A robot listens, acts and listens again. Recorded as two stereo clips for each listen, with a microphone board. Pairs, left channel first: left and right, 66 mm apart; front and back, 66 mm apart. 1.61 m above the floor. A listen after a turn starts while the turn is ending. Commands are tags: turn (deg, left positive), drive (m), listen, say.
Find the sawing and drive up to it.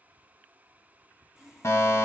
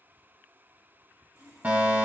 <turn deg="-170"/>
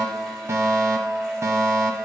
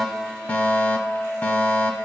<listen/>
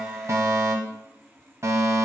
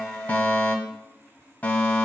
<turn deg="10"/>
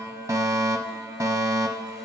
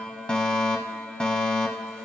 <listen/>
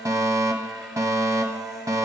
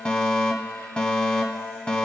<listen/>
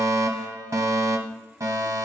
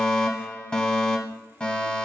<say>Facing where the sawing came from. I can't hear it now. I did not reach it.</say>